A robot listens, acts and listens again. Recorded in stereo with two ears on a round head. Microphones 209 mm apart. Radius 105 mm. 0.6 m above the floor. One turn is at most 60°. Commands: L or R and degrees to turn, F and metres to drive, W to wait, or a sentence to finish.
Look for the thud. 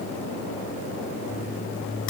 W
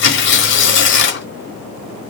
W
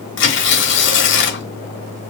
I can't make out a thud, only tearing paper.